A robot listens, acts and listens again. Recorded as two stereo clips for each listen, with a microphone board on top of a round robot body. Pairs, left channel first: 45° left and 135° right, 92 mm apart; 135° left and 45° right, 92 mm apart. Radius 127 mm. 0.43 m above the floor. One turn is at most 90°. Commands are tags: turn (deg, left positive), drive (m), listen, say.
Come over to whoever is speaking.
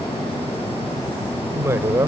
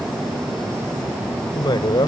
<turn deg="90"/>
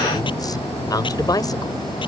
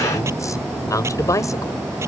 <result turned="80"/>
<turn deg="85"/>
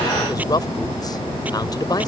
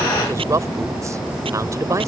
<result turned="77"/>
<turn deg="10"/>
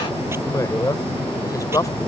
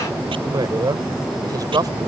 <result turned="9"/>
<drive m="1.0"/>
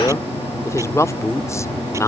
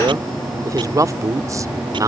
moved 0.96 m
<drive m="1.0"/>
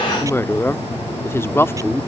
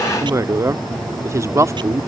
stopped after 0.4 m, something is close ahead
<say>I am next to the woman speaking.</say>